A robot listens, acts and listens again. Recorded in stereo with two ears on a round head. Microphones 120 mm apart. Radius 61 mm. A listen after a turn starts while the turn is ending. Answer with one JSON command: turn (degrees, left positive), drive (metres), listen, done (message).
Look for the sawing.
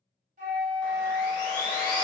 {"turn": 30}
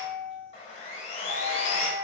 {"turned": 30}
{"turn": 120}
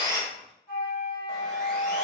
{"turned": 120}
{"listen": true}
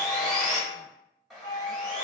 {"done": "Found it: sawing, straight ahead, 1 to 2 m away."}